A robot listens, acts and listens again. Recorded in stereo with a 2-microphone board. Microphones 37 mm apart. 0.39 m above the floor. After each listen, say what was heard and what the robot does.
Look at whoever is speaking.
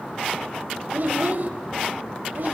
The child speaking: about 60° right or 120° right. Turn 60° right.
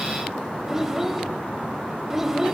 So it is at 15° right. Turn 15° right.
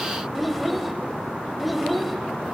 Found it: a child speaking, straight ahead.